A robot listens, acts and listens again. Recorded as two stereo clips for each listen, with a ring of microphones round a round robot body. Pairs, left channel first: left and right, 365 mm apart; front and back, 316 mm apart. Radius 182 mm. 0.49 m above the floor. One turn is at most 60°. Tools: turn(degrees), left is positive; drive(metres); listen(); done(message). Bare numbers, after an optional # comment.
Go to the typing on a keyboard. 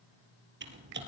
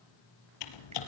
# The typing on a keyboard: 25° right.
turn(-25)
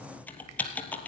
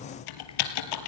drive(1.0)
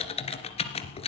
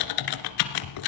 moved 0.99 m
# The typing on a keyboard is now 15° left.
turn(15)
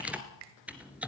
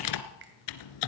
drive(1.0)
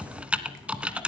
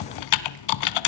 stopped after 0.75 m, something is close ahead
done("Arrived at the typing on a keyboard, straight ahead.")